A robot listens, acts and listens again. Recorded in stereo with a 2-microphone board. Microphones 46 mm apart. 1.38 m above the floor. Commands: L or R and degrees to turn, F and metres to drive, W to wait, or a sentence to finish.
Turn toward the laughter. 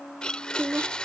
R60
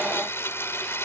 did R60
W
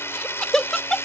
L15
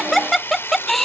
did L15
Found it: laughter, straight ahead.